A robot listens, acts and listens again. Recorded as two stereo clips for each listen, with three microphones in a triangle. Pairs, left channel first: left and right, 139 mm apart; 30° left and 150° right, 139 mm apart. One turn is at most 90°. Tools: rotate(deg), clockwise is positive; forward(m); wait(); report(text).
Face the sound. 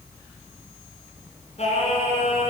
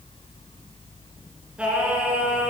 rotate(-90)
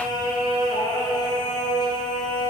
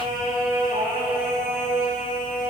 rotate(-30)
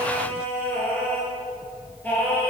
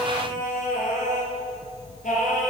rotate(-15)
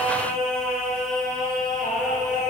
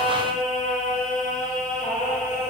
report("Facing the singing.")